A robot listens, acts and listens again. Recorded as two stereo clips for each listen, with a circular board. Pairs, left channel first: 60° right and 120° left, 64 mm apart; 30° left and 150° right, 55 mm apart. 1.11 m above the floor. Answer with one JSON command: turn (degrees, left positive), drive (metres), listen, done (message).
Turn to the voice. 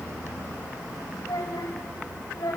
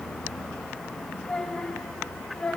{"turn": -45}
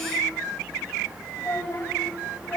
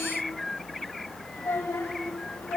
{"done": "Found it: a child speaking, straight ahead."}